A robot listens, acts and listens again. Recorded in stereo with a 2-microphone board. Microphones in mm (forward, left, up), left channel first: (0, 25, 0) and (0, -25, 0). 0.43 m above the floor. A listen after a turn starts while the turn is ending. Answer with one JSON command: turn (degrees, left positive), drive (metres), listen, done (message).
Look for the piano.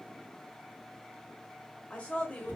{"listen": true}
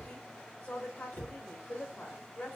{"listen": true}
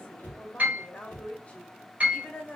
{"turn": -35}
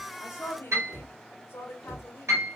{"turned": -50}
{"turn": -95}
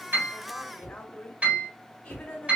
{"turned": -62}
{"turn": -30}
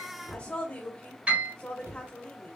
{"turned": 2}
{"turn": -30}
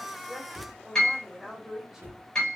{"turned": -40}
{"turn": 10}
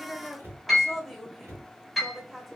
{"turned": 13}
{"done": "Found it: a piano, straight ahead, 2 to 4 m away."}